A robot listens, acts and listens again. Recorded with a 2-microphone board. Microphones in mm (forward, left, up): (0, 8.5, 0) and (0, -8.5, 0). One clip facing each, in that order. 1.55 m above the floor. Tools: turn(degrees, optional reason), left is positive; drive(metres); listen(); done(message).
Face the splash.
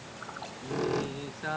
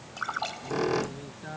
turn(degrees=-35, reason="The splash: about 35° right or 145° right.")
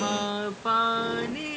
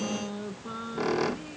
listen()
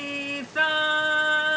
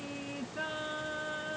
done("I heard a splash, but can't make it out now. It was about straight ahead or 110° right.")